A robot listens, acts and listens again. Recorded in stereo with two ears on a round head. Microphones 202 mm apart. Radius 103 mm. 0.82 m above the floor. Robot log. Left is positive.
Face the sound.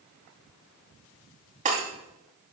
note: The breaking glass: about 35° right or 145° right.
cmd yaw -35
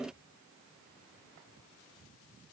cmd idle
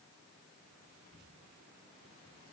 end: I heard breaking glass, but can't make it out now. It was about straight ahead or 110° right.